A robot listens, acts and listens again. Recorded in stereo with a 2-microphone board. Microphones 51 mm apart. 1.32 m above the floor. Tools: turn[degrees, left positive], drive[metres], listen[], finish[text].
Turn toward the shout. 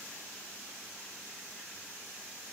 Action: listen[]
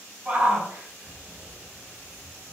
Thought: The shout: about 25° right or 155° right.
Action: turn[-25]
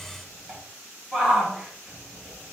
Action: finish[Facing the shout.]